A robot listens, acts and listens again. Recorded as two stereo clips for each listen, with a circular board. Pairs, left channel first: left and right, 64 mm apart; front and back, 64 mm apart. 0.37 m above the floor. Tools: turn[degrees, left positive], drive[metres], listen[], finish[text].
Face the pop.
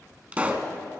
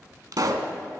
Thought: The pop: 160° right.
Action: turn[-160]
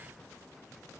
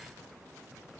Action: finish[I heard a pop from this way, but can't make it out now.]